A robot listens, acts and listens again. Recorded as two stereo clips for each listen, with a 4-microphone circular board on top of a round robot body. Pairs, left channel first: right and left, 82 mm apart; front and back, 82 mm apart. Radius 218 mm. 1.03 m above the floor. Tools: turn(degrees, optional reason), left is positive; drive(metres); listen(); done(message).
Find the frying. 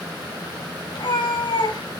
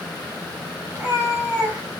listen()
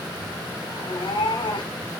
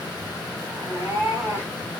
listen()
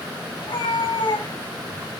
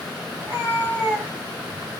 done("I can't make out frying, only a cat meowing.")